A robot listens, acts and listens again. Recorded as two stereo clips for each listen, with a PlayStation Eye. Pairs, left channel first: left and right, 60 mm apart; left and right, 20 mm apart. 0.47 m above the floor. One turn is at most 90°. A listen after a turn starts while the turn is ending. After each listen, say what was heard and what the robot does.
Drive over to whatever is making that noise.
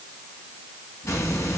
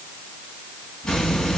The hiss: about 60° left or 120° left. Turn 60° left.
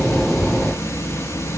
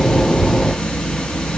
So it is at 60° left. Turn 60° left.
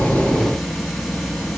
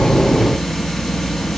Drive 1.0 m forward.
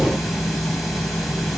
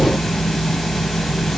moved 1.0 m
Drive 1.0 m forward.
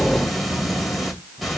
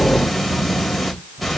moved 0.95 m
Drive 1.0 m forward.
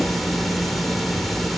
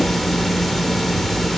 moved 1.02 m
Drive 1.0 m forward.
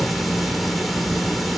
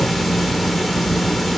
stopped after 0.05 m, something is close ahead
Arrived at the hiss, straight ahead.